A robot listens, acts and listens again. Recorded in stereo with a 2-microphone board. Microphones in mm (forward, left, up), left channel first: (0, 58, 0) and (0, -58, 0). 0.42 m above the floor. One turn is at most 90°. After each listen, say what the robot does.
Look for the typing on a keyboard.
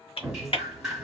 Turn 55° left.
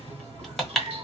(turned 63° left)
Facing the typing on a keyboard.